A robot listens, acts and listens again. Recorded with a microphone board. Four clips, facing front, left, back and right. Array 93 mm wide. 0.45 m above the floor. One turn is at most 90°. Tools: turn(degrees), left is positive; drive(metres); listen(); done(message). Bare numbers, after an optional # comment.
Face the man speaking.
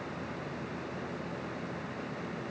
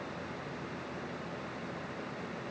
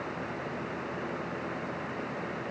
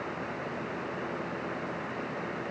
listen()
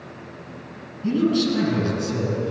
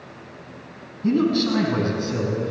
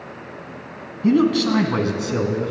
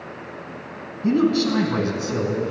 # The man speaking: 170° right.
turn(-90)
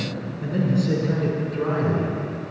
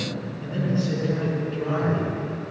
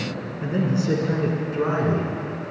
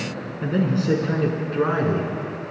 # The man speaking is now 105° right.
turn(-90)
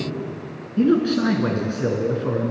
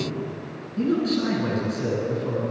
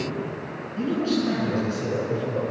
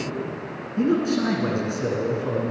# The man speaking is now 20° right.
turn(-20)
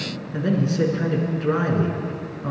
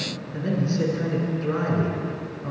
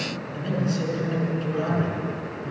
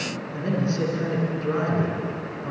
done("Facing the man speaking, over 4 m away.")